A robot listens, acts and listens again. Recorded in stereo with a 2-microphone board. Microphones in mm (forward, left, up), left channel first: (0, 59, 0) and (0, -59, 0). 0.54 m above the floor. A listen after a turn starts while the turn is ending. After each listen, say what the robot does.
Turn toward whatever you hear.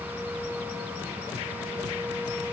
Keep listening.
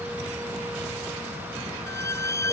Turn 25° left.
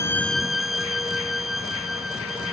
Facing the violin.